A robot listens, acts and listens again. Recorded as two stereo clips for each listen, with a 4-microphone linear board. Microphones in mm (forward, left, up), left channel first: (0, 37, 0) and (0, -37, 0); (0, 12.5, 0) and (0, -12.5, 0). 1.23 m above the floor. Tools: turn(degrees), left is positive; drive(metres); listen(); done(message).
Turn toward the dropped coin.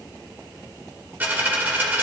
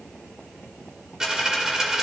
turn(degrees=-25)
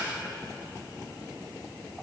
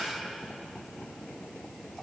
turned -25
listen()
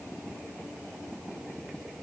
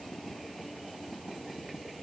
done("I heard a dropped coin, but can't make it out now. It was about straight ahead or 130° right.")